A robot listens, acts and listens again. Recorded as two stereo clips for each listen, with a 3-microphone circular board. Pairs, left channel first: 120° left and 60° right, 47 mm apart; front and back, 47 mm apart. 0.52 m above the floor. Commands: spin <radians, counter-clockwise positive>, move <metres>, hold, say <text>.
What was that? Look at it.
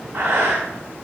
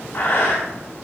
spin -0.79
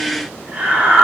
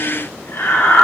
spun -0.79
say Found it: breathing, straight ahead.